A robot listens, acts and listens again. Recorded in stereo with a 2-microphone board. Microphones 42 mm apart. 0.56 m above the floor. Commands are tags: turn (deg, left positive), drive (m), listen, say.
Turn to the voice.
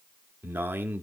<turn deg="-55"/>
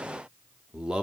<turn deg="-30"/>
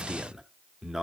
<turn deg="-15"/>
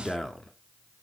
<say>Found it: a man speaking, straight ahead, 1 to 2 m away.</say>